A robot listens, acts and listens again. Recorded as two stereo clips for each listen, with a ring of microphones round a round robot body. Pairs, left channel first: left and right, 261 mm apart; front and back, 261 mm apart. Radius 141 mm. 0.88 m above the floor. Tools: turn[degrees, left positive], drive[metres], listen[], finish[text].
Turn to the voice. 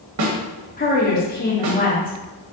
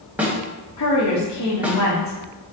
Thought: The woman speaking: 30° left.
Action: turn[30]
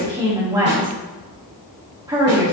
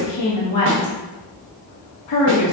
Thought: The woman speaking is now 15° right.
Action: turn[-15]
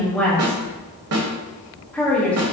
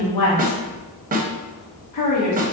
Action: finish[Facing the woman speaking.]